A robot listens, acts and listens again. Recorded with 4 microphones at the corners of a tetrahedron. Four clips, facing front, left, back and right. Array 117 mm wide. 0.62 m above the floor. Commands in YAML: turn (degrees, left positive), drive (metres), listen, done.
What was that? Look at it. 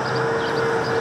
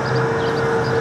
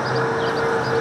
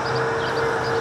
listen: true
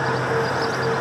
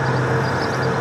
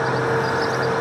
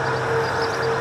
listen: true
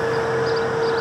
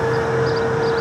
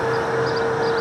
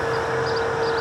done: "I can't make out anything."